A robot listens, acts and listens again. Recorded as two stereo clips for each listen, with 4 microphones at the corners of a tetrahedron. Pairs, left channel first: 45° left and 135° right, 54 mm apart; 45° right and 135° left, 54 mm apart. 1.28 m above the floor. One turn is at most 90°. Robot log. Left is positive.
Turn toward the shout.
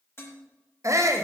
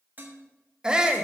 note: The shout: 150° right.
cmd yaw -90
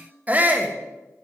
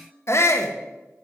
note: The shout is now 75° right.
cmd yaw -75
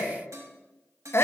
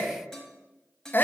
end: Facing the shout, under 1 m away.